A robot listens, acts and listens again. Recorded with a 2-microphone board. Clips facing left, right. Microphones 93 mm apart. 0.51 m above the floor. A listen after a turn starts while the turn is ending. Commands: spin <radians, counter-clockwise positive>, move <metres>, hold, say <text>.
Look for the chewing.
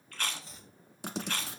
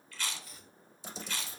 spin 0.96
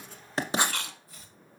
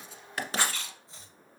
spin 1.22
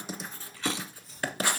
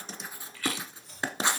spin 0.44
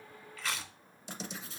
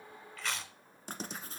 say Found it: chewing, straight ahead.